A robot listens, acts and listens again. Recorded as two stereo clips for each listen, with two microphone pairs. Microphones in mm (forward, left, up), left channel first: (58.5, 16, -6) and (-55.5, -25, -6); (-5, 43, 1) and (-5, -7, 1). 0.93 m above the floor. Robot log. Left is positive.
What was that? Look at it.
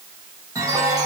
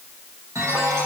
note: The chime: 100° right.
cmd yaw -100
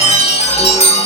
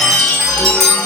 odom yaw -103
end: Found it: a chime, straight ahead.